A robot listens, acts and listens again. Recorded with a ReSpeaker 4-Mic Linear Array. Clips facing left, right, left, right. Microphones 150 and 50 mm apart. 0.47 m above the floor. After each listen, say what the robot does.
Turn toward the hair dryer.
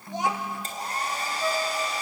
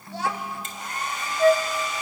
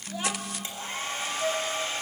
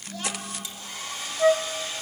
Turn 35° left.
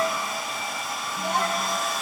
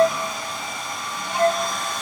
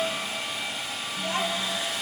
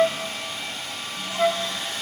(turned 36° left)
Found it: a hair dryer, straight ahead.